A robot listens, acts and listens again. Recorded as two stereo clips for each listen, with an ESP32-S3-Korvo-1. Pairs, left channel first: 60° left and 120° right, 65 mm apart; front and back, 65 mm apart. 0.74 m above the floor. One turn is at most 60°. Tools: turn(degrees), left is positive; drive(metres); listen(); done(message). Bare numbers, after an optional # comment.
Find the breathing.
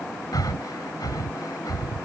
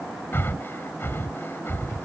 # The breathing: 55° left.
turn(55)
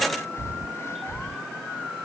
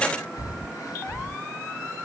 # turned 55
# The breathing is now 15° left.
turn(15)
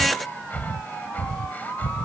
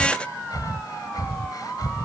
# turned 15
done("Facing the breathing.")